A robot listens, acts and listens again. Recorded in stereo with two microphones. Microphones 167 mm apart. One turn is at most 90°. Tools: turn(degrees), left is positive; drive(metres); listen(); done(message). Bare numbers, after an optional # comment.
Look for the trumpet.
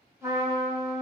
# The trumpet: about 20° right or 160° right.
turn(-20)
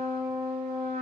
# So it is at 140° right.
turn(-90)
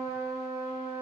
# The trumpet is now 75° right.
turn(-75)
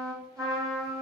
# The trumpet is now 20° right.
turn(-20)
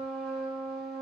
done("Facing the trumpet.")